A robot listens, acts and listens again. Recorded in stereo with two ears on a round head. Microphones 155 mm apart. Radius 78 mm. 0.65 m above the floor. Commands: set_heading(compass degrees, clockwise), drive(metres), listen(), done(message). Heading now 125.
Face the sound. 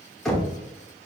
set_heading(95)
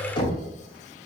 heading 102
set_heading(312)
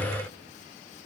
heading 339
set_heading(309)
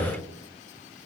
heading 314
done("Found it: knocking, straight ahead.")